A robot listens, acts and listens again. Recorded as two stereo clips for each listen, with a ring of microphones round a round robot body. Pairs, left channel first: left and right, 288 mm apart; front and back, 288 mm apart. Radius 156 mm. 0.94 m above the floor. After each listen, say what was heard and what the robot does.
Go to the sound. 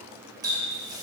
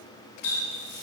The running tap: 15° right. Turn 15° right.
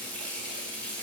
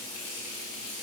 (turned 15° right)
Drive 1.0 m forward.
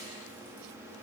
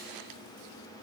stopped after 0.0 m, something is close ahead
Keep listening.
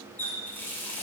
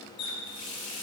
Blocked. The running tap is further on, straight ahead.